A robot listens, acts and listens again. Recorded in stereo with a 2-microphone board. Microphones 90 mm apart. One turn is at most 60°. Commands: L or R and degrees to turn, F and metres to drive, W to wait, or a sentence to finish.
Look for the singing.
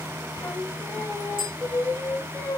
L25
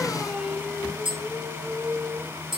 Found it: singing, straight ahead.